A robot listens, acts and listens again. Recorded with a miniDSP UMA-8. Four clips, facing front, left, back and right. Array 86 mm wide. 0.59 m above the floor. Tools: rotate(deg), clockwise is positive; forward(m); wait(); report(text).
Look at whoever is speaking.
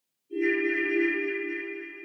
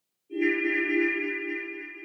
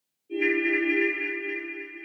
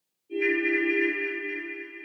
wait()
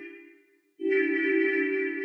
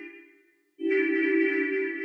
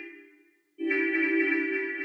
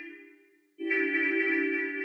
wait()
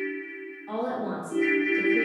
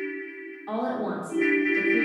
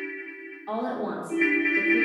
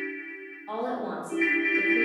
rotate(-135)
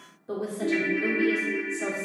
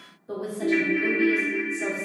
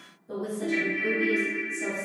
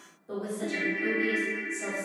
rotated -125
rotate(-10)
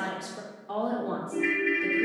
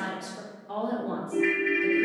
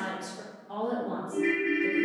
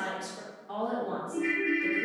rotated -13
report("Facing the woman speaking, 1 to 2 m away.")